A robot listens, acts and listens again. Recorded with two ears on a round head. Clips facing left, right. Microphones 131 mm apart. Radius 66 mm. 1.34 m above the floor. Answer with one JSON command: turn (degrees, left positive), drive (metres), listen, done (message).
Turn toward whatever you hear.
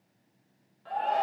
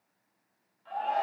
{"turn": 60}
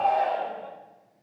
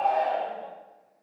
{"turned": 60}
{"done": "Facing the shout."}